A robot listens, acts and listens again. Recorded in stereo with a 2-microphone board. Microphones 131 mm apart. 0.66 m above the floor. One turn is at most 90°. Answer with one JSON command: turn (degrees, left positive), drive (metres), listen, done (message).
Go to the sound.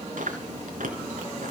{"turn": -90}
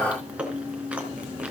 {"turn": -10}
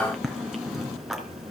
{"drive": 1.0}
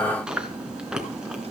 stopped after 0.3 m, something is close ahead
{"done": "Something is in my way. I am facing the chewing but have not reached it."}